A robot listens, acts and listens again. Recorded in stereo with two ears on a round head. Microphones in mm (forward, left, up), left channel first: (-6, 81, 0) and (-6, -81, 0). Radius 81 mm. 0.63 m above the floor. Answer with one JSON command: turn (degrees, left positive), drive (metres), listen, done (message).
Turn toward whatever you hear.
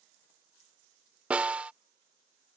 {"turn": -30}
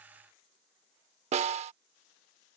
{"turn": -145}
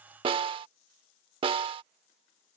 {"turn": -30}
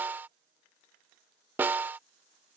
{"turn": -10}
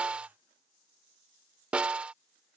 {"done": "Found it: a snare drum, straight ahead."}